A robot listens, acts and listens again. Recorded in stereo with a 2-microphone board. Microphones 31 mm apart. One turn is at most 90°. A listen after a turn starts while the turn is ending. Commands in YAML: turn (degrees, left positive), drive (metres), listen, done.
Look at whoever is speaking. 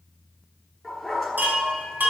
listen: true
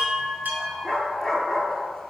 listen: true
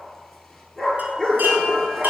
done: "I can't make out anyone speaking to turn to."